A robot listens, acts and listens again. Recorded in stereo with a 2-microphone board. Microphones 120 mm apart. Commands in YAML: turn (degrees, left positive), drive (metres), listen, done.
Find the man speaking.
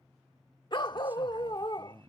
turn: -30
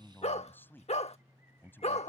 turn: 15
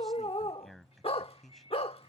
done: "Facing the man speaking."